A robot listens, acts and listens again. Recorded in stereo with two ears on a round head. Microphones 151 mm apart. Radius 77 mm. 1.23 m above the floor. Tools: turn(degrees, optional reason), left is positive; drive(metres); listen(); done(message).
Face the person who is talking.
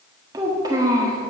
turn(degrees=-20, reason="The child speaking: about 20° right or 160° right.")
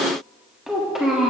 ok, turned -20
done("Facing the child speaking, 1 to 2 m away.")